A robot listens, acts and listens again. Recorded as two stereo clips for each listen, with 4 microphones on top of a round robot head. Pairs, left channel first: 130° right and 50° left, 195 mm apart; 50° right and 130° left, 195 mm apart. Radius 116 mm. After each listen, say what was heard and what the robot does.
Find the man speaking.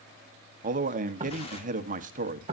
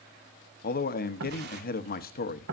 Facing the man speaking.